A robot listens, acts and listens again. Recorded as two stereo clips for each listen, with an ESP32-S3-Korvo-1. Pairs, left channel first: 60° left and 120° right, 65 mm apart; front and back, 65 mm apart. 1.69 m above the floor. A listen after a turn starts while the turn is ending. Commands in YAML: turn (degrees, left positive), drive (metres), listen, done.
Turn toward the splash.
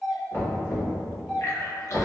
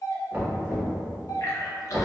turn: 25
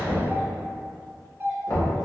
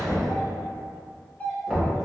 done: "I heard a splash from this way, but can't make it out now."